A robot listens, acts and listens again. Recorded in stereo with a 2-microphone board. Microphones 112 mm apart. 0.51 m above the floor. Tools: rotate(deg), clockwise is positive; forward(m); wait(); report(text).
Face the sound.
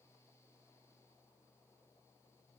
wait()
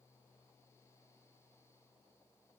wait()
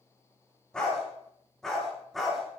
rotate(-30)
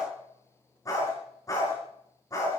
rotate(-150)
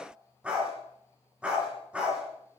rotate(10)
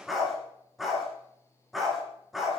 report("Found it: a dog barking, straight ahead.")